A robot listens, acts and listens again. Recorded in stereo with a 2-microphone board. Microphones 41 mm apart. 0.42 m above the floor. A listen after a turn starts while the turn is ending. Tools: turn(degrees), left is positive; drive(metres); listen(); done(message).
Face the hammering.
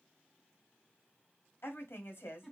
listen()
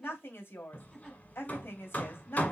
turn(degrees=35)
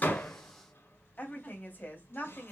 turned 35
listen()
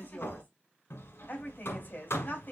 turn(degrees=110)
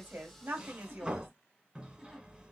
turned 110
turn(degrees=-20)
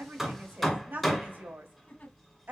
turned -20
done("Facing the hammering, 1 to 2 m away.")